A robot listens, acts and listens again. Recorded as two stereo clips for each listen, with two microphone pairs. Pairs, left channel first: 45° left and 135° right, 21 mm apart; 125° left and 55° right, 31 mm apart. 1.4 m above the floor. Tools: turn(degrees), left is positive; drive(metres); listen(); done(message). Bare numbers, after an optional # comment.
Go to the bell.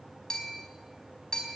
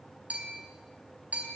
# The bell: 15° right.
turn(-15)
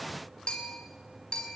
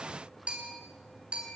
drive(1.0)
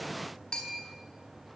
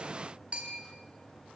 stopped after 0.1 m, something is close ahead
done("Blocked. The bell is further on, straight ahead.")